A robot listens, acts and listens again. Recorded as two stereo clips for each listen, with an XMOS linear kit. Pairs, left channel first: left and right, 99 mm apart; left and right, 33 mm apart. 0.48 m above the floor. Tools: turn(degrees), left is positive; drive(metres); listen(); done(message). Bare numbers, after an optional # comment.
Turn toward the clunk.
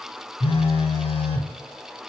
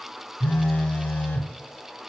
listen()
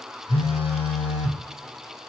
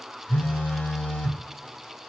listen()
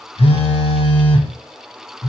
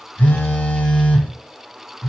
done("I can't make out a clunk to turn to.")